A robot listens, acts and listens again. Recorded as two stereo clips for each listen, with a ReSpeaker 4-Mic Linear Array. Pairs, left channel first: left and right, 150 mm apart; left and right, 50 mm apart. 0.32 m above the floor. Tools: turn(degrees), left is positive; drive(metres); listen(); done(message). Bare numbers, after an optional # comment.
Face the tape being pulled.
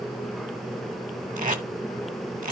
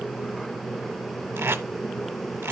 # The tape being pulled: about 60° right or 120° right.
turn(-60)
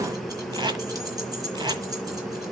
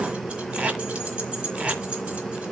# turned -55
# So it is at 35° right.
turn(-35)
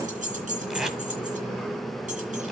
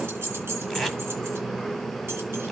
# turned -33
listen()
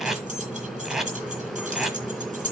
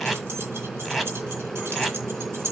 done("Facing the tape being pulled, 1 to 2 m away.")